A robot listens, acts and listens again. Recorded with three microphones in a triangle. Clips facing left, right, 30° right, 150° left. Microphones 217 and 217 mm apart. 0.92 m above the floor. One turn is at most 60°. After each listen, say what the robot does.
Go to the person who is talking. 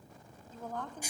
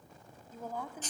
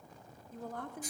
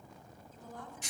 Turn 10° right.
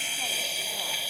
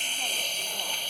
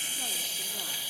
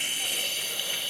Keep listening.
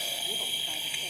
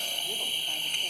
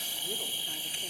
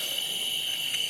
Keep listening.
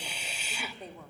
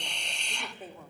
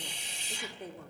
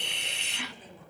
Drive 1.0 m forward.
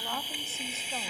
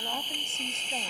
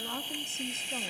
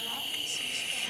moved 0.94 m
Keep listening.
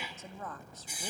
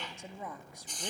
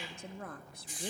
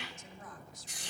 Turn 15° right.
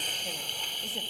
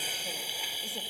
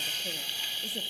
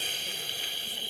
Keep listening.
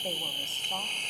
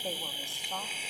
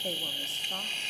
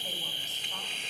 Keep listening.
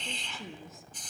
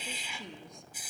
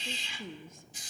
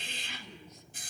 Drive 1.0 m forward.
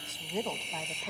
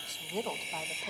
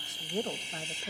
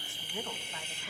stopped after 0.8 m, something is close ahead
I am next to the woman speaking.